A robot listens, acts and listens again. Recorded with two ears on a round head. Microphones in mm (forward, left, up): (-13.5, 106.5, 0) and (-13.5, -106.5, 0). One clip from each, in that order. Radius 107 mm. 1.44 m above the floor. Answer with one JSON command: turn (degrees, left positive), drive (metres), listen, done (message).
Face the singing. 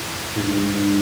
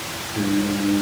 {"turn": -45}
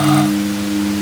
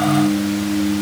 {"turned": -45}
{"done": "Facing the singing."}